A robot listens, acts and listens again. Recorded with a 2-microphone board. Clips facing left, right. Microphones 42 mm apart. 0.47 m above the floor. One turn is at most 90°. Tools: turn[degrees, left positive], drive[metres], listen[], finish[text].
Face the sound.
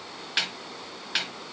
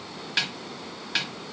Action: turn[30]
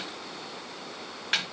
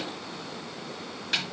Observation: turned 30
Thought: So it is at 140° left.
Action: turn[90]
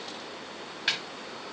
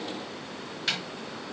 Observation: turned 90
Thought: The snare drum is now 20° left.
Action: turn[20]
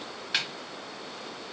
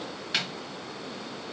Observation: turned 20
Action: finish[Facing the snare drum.]